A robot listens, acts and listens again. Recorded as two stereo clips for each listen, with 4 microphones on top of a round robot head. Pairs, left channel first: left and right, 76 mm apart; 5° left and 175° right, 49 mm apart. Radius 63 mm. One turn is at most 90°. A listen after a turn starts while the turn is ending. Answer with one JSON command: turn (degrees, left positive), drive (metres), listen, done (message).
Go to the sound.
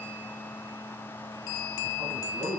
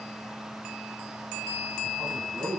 {"turn": -90}
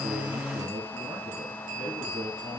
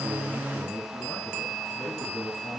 {"turn": -60}
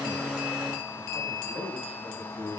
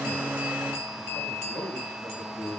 {"drive": 1.0}
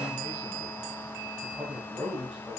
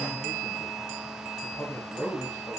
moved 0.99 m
{"turn": -15}
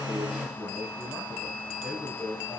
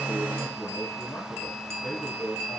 {"drive": 1.0}
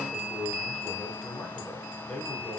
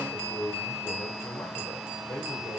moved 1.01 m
{"drive": 1.0}
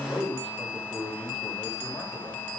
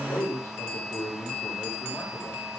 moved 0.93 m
{"turn": 10}
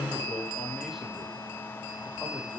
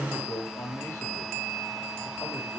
{"drive": 1.0}
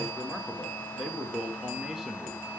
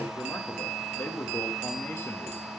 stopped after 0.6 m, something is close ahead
{"turn": -10}
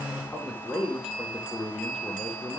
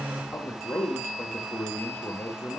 {"done": "Arrived at the man speaking, straight ahead."}